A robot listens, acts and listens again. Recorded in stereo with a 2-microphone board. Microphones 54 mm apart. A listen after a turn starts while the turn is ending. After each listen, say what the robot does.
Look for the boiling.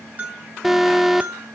Keep listening.
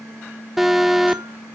Keep listening.
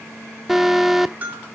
I can't make out boiling to turn to.